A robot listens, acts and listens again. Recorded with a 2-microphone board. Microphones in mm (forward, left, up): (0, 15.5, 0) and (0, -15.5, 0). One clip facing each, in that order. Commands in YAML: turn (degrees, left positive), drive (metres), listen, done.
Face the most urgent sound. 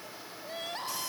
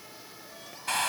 turn: 55
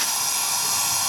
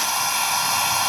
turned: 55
listen: true
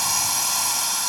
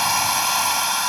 listen: true
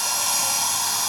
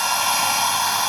done: "I heard crying, but can't make it out now. It was about straight ahead or 70° left."